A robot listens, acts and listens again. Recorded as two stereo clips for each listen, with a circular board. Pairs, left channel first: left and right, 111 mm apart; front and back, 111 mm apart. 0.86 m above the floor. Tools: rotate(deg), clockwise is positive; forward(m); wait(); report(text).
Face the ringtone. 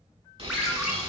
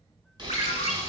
rotate(10)
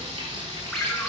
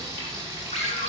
report("Facing the ringtone.")